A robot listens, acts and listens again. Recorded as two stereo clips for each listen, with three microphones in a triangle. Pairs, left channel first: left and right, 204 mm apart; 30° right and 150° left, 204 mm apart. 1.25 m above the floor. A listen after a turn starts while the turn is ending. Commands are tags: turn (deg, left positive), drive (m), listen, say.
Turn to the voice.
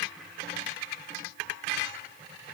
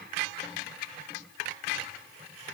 <listen/>
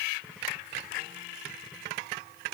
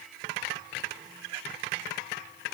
<listen/>
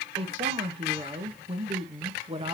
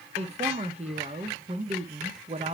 <turn deg="-150"/>
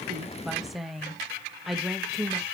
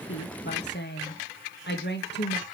<say>Facing the woman speaking, 1 to 2 m away.</say>